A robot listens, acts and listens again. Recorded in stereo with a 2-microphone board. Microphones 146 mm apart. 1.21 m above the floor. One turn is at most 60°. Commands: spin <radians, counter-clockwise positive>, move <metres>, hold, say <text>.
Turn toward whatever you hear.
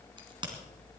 spin -0.61
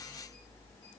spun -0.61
hold
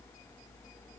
say I heard a crack, but can't make it out now. It was about straight ahead or 110° right.